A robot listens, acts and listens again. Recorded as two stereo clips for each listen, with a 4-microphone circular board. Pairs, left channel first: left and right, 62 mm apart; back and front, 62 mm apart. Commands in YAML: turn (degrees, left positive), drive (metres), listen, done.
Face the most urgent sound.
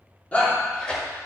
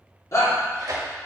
turn: 155
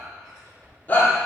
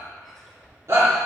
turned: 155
turn: 35
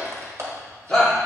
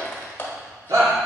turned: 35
turn: 10
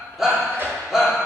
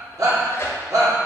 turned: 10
done: "Facing the shout."